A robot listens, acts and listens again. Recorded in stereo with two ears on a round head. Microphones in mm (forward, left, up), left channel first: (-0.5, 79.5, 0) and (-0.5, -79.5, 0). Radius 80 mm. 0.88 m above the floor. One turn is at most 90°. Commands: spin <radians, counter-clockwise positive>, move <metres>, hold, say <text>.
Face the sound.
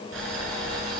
spin -1.31
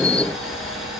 say Facing the boiling, over 4 m away.